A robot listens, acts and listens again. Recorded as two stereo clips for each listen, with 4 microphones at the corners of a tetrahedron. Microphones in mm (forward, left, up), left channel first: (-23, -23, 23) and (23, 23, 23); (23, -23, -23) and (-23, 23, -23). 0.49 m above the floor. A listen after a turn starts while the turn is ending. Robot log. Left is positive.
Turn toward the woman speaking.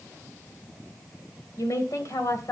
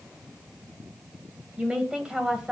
note: The woman speaking: 150° right.
cmd yaw -150
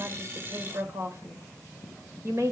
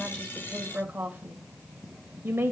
note: The woman speaking is now 85° left.
cmd yaw +85
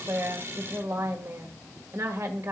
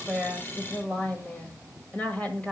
note: The woman speaking is now 20° left.
cmd yaw +20
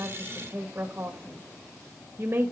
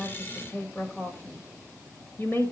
end: Found it: a woman speaking, straight ahead.